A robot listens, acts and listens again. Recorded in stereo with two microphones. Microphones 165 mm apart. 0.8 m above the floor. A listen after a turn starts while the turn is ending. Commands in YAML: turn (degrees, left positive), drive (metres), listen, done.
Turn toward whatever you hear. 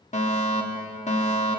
turn: 45
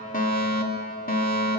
turn: 80
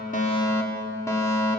turn: 20
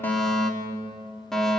done: "Found it: a fire alarm, straight ahead."